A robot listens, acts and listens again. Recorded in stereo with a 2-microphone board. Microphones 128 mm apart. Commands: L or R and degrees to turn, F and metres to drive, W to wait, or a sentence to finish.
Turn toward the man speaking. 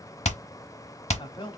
L40
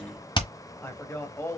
L20
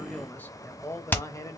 L30
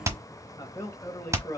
L25
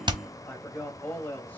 L15
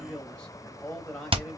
L10
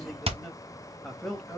Facing the man speaking, 1 to 2 m away.